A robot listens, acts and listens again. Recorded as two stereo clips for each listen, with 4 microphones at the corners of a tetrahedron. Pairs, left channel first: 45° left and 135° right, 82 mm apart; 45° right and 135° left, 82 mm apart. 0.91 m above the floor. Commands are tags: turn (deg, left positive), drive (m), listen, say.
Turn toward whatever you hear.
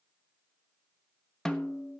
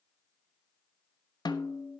<turn deg="-35"/>
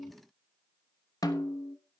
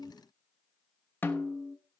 <turn deg="15"/>
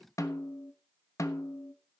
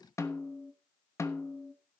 <say>Found it: a snare drum, straight ahead.</say>